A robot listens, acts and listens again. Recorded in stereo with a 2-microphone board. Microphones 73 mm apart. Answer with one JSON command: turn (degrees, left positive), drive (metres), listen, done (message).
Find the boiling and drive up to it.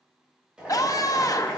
{"turn": -30}
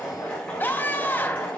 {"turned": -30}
{"turn": 15}
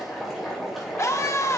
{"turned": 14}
{"drive": 1.0}
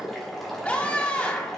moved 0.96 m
{"drive": 1.0}
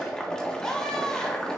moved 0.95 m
{"turn": 10}
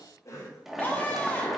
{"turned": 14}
{"drive": 1.0}
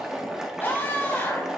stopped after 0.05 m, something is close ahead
{"turn": -10}
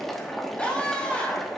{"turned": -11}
{"done": "I am next to the boiling."}